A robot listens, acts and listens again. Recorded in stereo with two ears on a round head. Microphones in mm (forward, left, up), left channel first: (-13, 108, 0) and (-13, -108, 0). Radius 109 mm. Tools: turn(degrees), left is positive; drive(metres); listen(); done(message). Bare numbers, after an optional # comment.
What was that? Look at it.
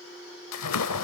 # The splash: about 75° left or 105° left.
turn(75)
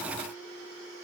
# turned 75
listen()
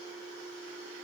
done("I heard a splash, but can't make it out now. It was about straight ahead or 30° left.")